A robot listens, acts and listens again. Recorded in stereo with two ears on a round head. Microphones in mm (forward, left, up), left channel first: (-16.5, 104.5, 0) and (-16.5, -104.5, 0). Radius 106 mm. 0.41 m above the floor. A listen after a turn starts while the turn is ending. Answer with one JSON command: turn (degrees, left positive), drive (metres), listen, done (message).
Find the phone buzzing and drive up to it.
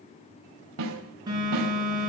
{"turn": -20}
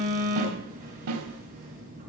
{"turn": -140}
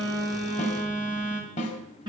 {"turn": -20}
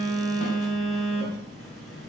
{"drive": 1.0}
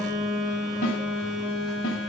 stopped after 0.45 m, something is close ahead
{"done": "Something is in my way. I am facing the phone buzzing but have not reached it."}